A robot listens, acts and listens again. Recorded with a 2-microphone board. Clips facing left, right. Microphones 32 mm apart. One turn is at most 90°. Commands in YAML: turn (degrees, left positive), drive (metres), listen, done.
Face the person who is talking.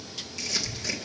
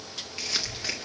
turn: -70
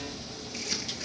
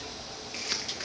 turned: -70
turn: -35
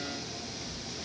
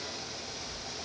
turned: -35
turn: 15
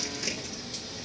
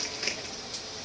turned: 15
done: "Facing the child speaking, over 4 m away."